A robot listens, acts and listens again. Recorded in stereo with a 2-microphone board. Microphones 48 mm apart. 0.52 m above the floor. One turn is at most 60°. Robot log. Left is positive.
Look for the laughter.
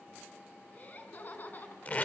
note: The laughter: about 40° left or 140° left.
cmd yaw +40
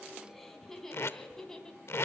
note: So it is at 10° left.
cmd yaw +10
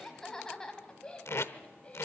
note: The laughter is now 25° left.
cmd yaw +25
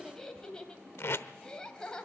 note: The laughter is now 15° left.
cmd yaw +15
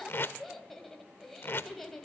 end: Found it: laughter, straight ahead, 2 to 4 m away.